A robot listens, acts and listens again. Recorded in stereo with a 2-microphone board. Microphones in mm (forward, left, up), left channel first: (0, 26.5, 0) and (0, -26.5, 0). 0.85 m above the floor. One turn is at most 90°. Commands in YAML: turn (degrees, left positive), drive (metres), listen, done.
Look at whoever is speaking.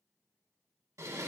listen: true
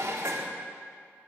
listen: true
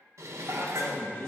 turn: 90
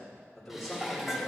done: "Found it: a man speaking, straight ahead, 2 to 4 m away."